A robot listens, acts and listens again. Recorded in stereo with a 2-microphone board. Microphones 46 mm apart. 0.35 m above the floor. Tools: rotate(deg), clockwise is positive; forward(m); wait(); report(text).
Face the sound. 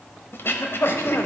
rotate(-55)
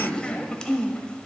rotate(-25)
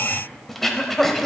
report("Facing the throat clearing.")